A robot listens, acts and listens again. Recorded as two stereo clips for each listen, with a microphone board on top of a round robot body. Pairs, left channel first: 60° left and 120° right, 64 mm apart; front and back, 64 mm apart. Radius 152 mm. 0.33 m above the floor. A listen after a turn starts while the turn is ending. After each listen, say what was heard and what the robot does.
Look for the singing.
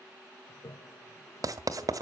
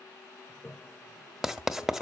Keep listening.
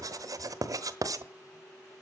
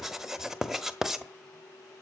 Keep listening.
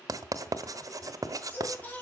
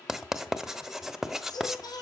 The singing: 10° right. Turn 10° right.
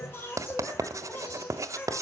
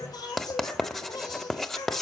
Facing the singing.